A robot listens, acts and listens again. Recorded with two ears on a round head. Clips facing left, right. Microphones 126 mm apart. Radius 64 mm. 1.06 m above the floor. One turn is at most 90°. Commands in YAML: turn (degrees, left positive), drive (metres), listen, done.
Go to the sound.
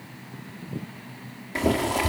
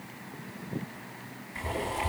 turn: 90
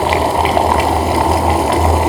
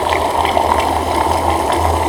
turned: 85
drive: 1.0
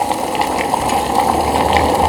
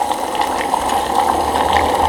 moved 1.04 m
turn: 10
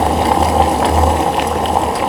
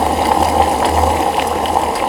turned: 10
drive: 1.0
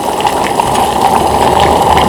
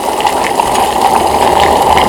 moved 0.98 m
drive: 1.0
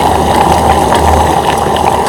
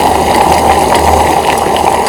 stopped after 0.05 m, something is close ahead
turn: -10
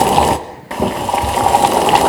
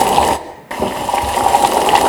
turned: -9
done: "Arrived at the boiling, straight ahead."